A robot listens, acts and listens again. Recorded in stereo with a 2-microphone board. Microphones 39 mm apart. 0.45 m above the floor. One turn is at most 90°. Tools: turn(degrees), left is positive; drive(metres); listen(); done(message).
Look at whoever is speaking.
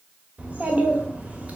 turn(degrees=-35)
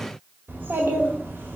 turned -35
turn(degrees=-90)
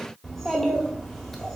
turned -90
done("Found it: a child speaking, straight ahead, 1 to 2 m away.")